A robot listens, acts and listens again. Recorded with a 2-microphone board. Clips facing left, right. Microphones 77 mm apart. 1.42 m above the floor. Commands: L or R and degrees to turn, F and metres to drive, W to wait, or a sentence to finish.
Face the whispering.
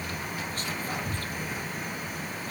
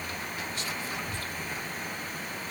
L45
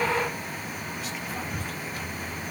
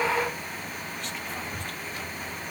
Found it: whispering, straight ahead, under 1 m away.